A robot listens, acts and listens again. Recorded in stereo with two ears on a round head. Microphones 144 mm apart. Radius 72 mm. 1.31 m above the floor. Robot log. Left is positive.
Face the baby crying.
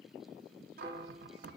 cmd idle
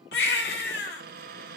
note: The baby crying: about 70° left or 110° left.
cmd yaw +70
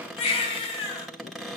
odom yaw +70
note: So it is at 35° left.
cmd yaw +35
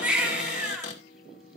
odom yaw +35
end: Facing the baby crying, 2 to 4 m away.